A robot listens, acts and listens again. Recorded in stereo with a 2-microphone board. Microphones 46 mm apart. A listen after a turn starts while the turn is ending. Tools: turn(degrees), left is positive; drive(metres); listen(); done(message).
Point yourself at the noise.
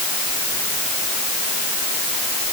listen()
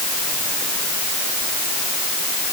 listen()
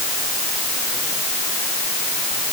done("I can't make out anything.")